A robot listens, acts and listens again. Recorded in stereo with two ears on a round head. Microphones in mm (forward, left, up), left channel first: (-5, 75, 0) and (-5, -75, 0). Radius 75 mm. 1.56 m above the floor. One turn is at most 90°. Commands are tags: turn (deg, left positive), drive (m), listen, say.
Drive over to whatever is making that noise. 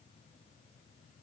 <listen/>
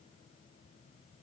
<listen/>
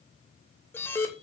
<turn deg="30"/>
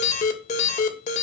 <turn deg="90"/>
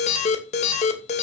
<turn deg="40"/>
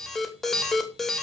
<drive m="1.0"/>
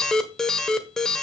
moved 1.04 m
<drive m="1.0"/>
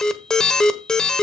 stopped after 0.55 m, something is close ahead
<say>Arrived at the alarm, straight ahead.</say>